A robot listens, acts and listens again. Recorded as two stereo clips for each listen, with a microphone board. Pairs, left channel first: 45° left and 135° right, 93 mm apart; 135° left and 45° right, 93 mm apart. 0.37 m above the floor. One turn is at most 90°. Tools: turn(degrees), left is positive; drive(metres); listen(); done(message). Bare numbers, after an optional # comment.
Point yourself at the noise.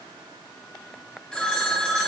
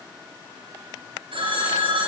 # The phone ringing: 35° right.
turn(-35)
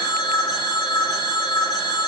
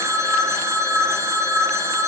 # The phone ringing is now 10° left.
turn(10)
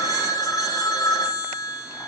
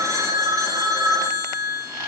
done("Facing the phone ringing.")